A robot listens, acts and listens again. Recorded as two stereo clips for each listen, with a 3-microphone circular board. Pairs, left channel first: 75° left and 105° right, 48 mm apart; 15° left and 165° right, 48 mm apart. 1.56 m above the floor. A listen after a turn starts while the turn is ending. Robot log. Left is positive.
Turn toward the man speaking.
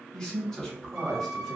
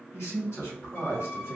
note: The man speaking: 15° right.
cmd yaw -15
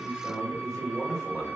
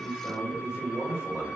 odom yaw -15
note: The man speaking is now 15° right.
cmd yaw -15
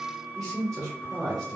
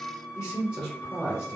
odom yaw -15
note: The man speaking is now 15° right.
cmd yaw -15
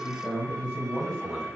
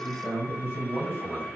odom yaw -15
end: Found it: a man speaking, straight ahead, 2 to 4 m away.